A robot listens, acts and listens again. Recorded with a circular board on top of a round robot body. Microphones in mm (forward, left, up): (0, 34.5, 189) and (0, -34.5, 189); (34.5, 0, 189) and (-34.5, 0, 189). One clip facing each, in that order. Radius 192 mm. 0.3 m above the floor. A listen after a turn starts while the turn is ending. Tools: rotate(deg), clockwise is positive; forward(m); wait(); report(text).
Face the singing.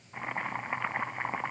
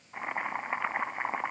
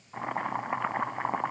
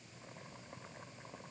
wait()
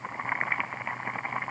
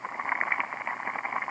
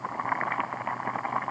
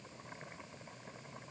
wait()
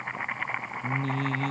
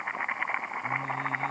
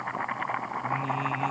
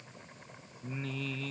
rotate(-80)
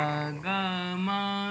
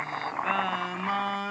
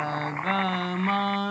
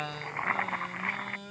rotate(15)
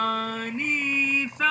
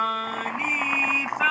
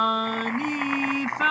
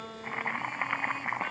report("Found it: singing, straight ahead.")